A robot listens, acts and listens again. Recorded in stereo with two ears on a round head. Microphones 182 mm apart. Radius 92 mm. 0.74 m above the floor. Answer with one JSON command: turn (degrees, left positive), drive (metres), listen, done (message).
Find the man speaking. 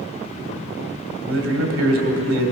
{"turn": -75}
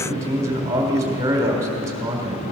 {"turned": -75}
{"turn": -15}
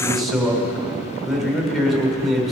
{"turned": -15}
{"done": "Found it: a man speaking, straight ahead."}